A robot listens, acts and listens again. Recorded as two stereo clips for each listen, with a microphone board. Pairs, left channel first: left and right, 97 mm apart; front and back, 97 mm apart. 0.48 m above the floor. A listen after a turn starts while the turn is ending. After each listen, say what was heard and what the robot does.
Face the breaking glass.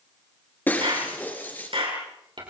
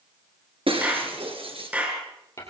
The breaking glass: 160° left. Turn 160° left.
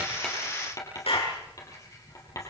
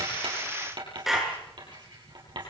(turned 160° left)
Facing where the breaking glass came from. I can't hear it now.